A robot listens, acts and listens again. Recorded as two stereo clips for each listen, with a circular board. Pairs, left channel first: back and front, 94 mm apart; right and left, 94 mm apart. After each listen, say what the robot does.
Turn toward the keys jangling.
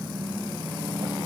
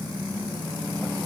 Keep listening.
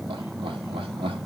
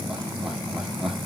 Keep listening.
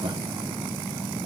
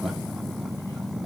I can't make out keys jangling to turn to.